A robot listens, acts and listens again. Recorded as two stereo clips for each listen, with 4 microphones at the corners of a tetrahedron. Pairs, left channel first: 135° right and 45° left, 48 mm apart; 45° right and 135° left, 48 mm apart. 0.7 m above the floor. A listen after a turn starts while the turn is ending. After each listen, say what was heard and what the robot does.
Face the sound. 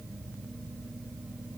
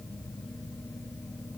Keep listening.
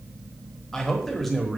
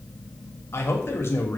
The man speaking: 45° right. Turn 45° right.
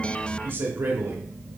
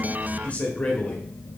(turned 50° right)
The man speaking is now 20° left. Turn 20° left.
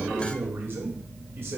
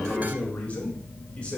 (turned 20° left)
The man speaking is now 20° left. Turn 20° left.
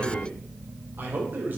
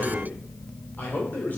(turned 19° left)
Facing the man speaking, 2 to 4 m away.